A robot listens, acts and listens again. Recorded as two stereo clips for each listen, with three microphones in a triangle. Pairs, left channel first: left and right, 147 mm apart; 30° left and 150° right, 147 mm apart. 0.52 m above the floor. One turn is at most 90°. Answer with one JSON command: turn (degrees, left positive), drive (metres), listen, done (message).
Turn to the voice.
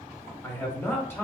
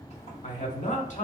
{"turn": 20}
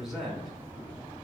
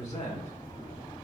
{"done": "Facing the man speaking."}